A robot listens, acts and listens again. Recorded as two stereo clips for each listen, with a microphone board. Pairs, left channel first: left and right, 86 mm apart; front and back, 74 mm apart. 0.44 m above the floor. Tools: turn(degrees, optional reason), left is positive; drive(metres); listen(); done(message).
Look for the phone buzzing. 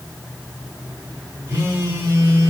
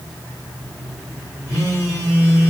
turn(degrees=-50, reason="The phone buzzing: 50° right.")
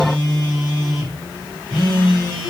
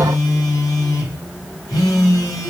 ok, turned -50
turn(degrees=-10, reason="The phone buzzing is now 10° right.")
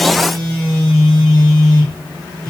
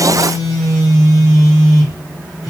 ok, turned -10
done("Found it: a phone buzzing, straight ahead.")